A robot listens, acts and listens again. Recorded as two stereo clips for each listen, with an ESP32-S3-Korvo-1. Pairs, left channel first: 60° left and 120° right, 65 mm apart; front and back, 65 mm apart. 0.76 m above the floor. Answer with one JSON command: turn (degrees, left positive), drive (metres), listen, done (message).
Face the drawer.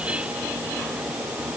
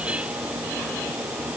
{"listen": true}
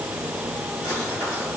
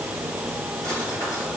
{"listen": true}
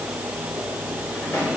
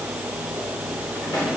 {"turn": 10}
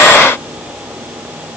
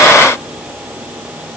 {"listen": true}
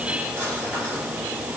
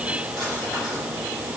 {"listen": true}
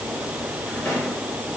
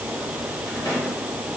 {"done": "Found it: a drawer, straight ahead, 1 to 2 m away."}